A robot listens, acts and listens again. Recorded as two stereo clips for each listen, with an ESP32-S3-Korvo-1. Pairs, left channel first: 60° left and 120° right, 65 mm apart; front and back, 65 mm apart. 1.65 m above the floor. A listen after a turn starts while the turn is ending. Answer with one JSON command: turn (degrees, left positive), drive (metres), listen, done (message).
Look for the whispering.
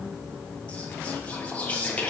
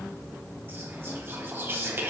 {"turn": 125}
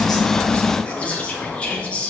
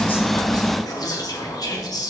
{"turn": -10}
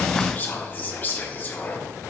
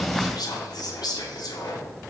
{"done": "Facing the whispering, under 1 m away."}